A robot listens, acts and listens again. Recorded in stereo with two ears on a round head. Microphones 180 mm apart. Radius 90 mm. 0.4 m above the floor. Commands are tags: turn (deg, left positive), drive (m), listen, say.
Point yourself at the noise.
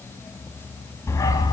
<turn deg="25"/>
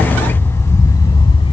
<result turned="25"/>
<turn deg="30"/>
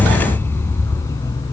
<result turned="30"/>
<turn deg="20"/>
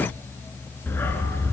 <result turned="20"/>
<turn deg="30"/>
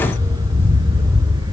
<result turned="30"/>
<turn deg="-20"/>
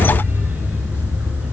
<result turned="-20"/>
<say>Found it: a dog barking, straight ahead.</say>